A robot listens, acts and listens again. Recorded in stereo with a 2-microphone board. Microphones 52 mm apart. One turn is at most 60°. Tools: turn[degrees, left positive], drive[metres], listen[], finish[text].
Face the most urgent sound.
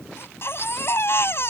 Thought: The baby crying: about 50° left or 130° left.
Action: turn[50]
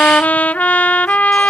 Action: listen[]
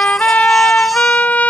Action: listen[]
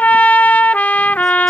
Action: finish[I heard a baby crying, but can't make it out now. It was about straight ahead or 80° left.]